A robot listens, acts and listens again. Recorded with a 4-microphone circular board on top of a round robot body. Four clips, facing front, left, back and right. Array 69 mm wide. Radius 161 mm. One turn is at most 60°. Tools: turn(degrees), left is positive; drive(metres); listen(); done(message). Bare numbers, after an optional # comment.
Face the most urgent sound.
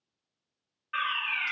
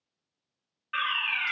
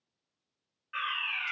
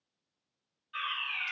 # The fire alarm: 80° left.
turn(60)
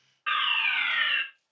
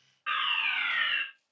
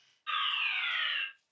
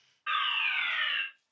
# The fire alarm is now 10° left.
turn(10)
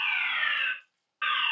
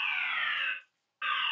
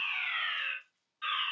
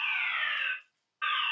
done("Facing the fire alarm, over 4 m away.")